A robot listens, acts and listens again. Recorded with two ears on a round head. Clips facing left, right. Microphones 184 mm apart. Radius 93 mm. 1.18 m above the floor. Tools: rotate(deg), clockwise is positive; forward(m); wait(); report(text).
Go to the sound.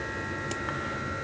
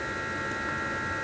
wait()
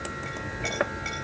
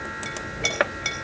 rotate(55)
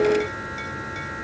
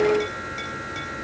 wait()
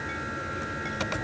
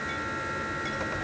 wait()
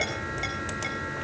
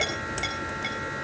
forward(1.0)
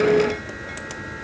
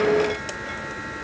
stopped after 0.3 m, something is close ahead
wait()
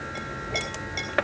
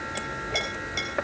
report("Blocked. The clink is further on, straight ahead.")